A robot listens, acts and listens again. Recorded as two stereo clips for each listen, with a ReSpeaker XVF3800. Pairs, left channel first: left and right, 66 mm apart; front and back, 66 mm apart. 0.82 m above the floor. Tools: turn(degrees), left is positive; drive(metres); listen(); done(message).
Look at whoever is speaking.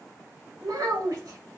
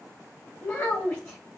turn(degrees=-60)
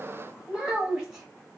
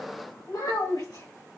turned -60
done("Facing the child speaking.")